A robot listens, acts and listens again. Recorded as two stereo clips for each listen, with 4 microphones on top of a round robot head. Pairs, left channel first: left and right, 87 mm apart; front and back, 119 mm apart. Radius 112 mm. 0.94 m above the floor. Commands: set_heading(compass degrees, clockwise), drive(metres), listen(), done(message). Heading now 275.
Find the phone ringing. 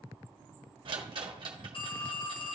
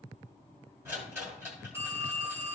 set_heading(165)
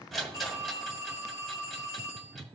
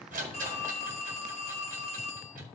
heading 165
set_heading(130)
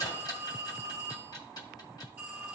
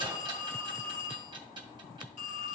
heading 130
set_heading(145)
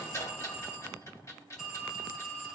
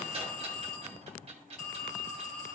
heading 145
done("Facing the phone ringing, 1 to 2 m away.")